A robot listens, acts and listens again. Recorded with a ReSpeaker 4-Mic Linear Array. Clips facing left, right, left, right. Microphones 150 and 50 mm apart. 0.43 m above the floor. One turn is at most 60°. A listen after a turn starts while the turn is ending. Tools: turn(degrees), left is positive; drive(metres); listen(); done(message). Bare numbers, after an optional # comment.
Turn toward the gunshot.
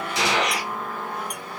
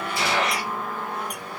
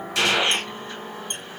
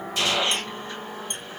turn(60)
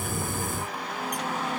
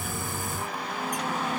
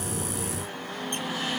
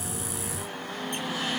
# Nothing new. It was at 30° left.
turn(30)
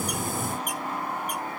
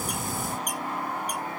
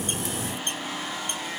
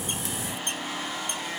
done("I heard a gunshot from this way, but can't make it out now.")